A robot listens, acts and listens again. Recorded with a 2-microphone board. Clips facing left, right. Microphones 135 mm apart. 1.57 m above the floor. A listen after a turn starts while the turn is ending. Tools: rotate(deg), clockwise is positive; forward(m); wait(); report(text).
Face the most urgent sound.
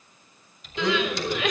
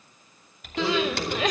rotate(35)
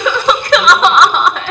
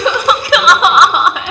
report("Facing the crying, 1 to 2 m away.")